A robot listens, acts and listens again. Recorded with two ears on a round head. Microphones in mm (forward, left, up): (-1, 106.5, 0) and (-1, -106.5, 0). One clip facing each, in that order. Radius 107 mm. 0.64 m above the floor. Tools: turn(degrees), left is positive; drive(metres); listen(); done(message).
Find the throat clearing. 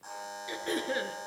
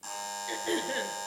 turn(degrees=30)
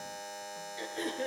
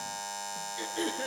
turn(degrees=-20)
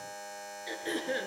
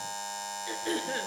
done("Facing the throat clearing, over 4 m away.")